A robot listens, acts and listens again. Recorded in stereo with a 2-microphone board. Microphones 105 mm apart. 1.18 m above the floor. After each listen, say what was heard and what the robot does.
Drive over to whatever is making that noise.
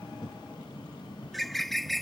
Turn 30° left.
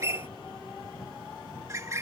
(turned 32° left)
So it is at 30° right. Turn 30° right.
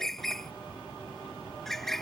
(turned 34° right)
Drive 1.0 m forward.
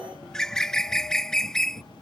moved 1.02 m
Drive 1.0 m forward.
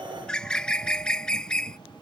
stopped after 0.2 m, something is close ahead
The bird is now 10° left. Turn 10° left.
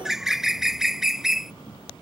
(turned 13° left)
Arrived at the bird, straight ahead.